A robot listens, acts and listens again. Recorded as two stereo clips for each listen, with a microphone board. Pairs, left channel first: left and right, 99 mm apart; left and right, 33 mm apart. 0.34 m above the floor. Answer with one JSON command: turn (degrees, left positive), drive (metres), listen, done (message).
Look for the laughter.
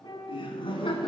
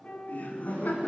{"turn": 60}
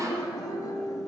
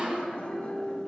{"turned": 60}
{"turn": 40}
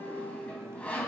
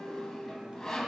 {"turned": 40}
{"listen": true}
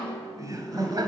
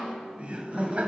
{"turn": -45}
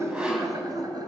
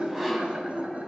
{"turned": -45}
{"turn": -45}
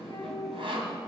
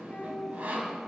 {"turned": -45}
{"done": "Facing the laughter."}